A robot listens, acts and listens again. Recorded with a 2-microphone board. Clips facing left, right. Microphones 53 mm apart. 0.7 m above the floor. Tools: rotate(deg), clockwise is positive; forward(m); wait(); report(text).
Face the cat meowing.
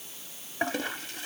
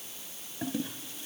wait()
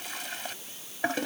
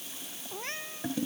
rotate(90)
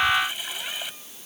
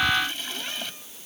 wait()
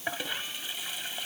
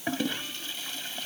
wait()
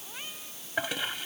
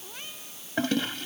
report("Facing where the cat meowing came from. I can't hear it now.")